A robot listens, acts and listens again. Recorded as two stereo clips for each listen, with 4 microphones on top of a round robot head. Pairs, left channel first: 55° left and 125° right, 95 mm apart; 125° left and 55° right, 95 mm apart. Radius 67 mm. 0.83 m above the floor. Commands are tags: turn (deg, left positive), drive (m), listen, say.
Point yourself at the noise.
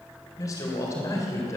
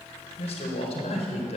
<turn deg="115"/>
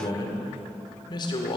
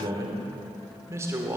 <turn deg="10"/>
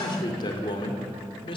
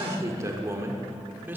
<turn deg="20"/>
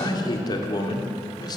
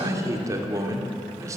<say>Facing the man speaking, 2 to 4 m away.</say>